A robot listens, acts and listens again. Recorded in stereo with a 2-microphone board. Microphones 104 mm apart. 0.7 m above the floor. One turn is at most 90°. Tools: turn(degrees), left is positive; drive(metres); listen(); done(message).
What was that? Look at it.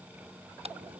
turn(degrees=-90)
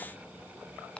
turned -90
turn(degrees=10)
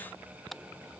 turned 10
done("Facing the car horn.")